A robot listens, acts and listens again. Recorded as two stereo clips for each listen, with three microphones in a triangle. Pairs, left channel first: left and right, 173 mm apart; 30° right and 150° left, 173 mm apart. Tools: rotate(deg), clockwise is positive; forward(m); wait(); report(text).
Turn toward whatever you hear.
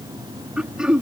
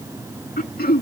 report("Facing the throat clearing.")